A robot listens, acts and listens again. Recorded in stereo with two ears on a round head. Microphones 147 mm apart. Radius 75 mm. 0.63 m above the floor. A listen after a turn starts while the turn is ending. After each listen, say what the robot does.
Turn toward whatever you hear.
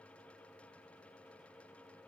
Keep listening.
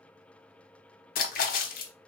Turn 55° left.
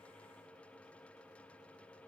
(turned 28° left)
Keep listening.
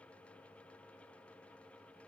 I heard a splash, but can't make it out now. It was about 25° left or 100° left.